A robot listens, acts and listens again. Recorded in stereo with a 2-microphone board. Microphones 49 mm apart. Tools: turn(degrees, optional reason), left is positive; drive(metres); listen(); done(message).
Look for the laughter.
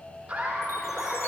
turn(degrees=-20, reason="The laughter: about 20° right or 160° right.")
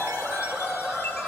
done("Found it: laughter, straight ahead.")